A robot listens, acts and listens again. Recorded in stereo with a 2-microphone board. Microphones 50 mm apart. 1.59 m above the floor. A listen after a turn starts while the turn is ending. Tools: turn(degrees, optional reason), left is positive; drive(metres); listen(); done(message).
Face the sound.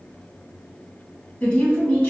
turn(degrees=30, reason="The woman speaking: about 30° left or 150° left.")
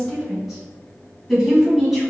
done("Facing the woman speaking, 2 to 4 m away.")